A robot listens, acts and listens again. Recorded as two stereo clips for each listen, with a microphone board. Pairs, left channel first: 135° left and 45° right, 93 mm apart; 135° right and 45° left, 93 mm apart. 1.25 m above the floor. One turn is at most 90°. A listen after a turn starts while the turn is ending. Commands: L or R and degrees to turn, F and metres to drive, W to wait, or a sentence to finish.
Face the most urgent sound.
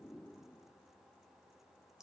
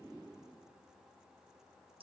W
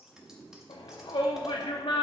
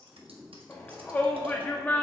L90
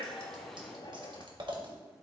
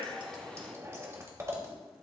L90
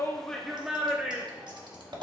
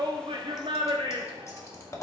L35
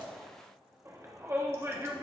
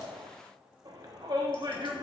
L10
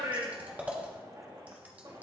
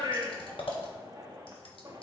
Facing the shout.